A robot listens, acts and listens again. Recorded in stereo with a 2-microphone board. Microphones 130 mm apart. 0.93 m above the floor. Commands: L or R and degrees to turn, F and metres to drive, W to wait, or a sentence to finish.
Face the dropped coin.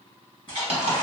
R55
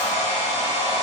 W
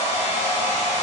I heard a dropped coin, but can't make it out now. It was about straight ahead or 70° right.